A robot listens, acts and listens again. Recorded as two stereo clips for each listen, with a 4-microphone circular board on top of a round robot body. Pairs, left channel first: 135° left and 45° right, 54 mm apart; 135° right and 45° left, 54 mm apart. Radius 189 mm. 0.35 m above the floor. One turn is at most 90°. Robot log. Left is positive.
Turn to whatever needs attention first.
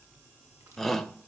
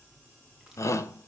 note: The shout: 135° right.
cmd yaw -90
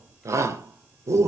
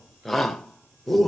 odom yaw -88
note: The shout is now 50° right.
cmd yaw -50
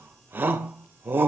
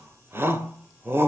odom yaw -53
end: Facing the shout, 2 to 4 m away.